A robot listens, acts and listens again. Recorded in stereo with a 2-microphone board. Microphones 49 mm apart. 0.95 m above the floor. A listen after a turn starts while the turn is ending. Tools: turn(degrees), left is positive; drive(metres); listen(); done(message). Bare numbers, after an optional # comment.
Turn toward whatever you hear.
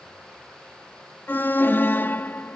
# The alarm: about 45° left or 135° left.
turn(45)
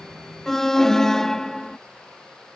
# So it is at 10° left.
turn(10)
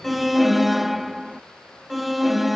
done("Found it: an alarm, straight ahead.")